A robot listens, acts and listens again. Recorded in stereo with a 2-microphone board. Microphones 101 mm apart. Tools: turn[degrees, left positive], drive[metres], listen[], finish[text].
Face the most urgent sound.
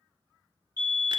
Thought: The fire alarm: about 30° left or 150° left.
Action: turn[30]
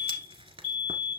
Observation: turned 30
Action: finish[Found it: a fire alarm, straight ahead, over 4 m away.]